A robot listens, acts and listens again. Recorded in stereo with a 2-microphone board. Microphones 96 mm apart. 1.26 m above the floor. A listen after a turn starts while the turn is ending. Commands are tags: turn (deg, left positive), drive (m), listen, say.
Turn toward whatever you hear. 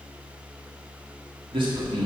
<turn deg="-55"/>
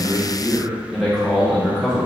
<say>Found it: a man speaking, straight ahead.</say>